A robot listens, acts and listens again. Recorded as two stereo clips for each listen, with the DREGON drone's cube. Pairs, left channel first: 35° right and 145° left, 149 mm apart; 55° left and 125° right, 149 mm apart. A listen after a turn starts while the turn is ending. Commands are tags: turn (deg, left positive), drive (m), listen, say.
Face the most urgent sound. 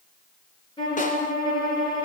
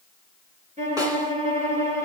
<listen/>
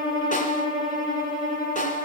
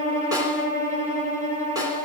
<listen/>
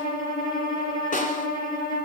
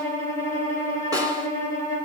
<say>I can't make out anything urgent to turn to.</say>